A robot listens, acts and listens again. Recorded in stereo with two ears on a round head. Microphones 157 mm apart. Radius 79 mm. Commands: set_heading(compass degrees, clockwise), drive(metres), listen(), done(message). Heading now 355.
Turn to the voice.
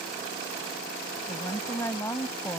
set_heading(340)
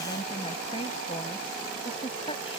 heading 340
set_heading(190)
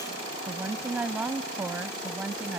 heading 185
set_heading(195)
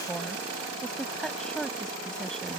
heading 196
done("Found it: a woman speaking, straight ahead.")